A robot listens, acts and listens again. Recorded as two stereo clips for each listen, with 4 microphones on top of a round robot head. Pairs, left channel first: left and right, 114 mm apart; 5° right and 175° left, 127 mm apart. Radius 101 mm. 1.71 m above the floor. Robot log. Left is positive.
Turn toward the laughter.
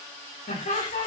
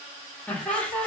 note: The laughter: 75° left.
cmd yaw +75
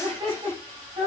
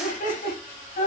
note: The laughter is now 35° right.
cmd yaw -35
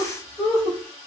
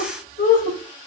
end: Facing the laughter.